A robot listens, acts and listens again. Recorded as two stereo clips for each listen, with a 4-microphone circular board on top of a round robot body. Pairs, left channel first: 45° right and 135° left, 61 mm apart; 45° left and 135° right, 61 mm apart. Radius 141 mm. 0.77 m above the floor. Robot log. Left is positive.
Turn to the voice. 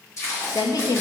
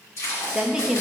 note: The woman speaking: 55° right.
cmd yaw -55
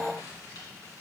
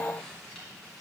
cmd idle
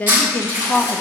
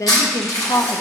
note: The woman speaking is now 15° left.
cmd yaw +15
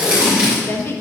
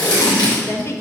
end: Facing the woman speaking, under 1 m away.